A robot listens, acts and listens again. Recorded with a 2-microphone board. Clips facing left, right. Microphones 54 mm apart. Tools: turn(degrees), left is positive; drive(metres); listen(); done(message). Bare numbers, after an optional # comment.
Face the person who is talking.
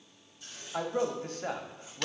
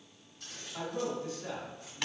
# The man speaking: about 50° left or 130° left.
turn(50)
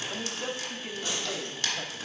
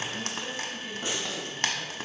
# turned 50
# So it is at 65° left.
turn(65)
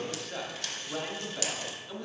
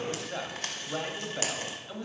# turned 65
# The man speaking is now 10° right.
turn(-10)
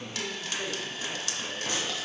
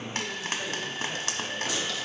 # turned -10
listen()
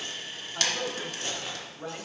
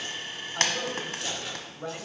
done("Found it: a man speaking, straight ahead.")